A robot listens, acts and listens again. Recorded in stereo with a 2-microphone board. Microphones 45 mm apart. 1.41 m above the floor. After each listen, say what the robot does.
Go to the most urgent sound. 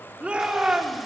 Turn 25° right.
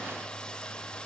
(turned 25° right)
Keep listening.
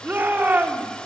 Turn 130° right.
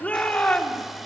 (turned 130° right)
Turn 30° left.
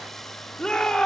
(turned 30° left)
Turn 15° left.
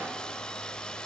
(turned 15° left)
Keep listening.
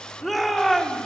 Drive 1.0 m forward.
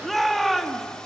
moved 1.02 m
Drive 1.0 m forward.
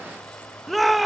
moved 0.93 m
Drive 1.0 m forward.
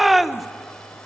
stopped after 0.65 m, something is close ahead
I am next to the shout.